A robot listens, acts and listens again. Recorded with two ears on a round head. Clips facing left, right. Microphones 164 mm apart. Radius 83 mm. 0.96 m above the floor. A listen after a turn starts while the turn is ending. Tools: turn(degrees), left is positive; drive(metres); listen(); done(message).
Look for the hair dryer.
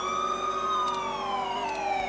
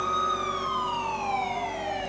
listen()
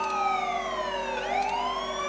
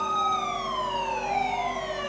listen()
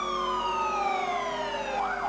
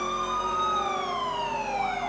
done("I can't make out a hair dryer to turn to.")